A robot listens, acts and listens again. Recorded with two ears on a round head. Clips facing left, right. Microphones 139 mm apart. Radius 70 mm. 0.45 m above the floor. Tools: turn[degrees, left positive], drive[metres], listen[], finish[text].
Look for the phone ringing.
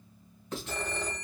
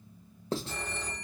Thought: The phone ringing: about 65° left or 115° left.
Action: turn[65]
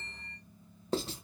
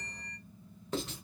Thought: So it is at 40° left.
Action: turn[40]
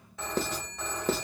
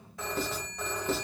Action: finish[Found it: a phone ringing, straight ahead.]